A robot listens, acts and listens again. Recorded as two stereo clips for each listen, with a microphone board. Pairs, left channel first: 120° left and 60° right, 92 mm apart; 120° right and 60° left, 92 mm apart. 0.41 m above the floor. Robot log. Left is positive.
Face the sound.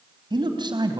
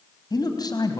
note: The man speaking: 85° right.
cmd yaw -85
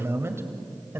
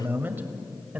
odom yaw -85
note: The man speaking is now 10° right.
cmd yaw -10
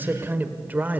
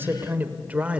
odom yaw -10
end: Facing the man speaking, 1 to 2 m away.